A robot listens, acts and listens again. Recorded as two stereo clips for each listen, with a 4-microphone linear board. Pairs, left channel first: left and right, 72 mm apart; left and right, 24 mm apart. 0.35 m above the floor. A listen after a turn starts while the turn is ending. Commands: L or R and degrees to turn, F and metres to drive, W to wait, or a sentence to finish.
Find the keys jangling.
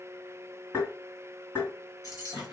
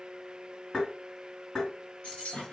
L55
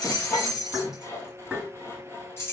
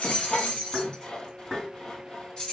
L35
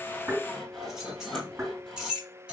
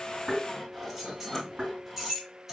R15
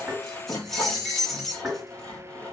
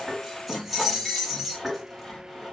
Found it: keys jangling, straight ahead, 2 to 4 m away.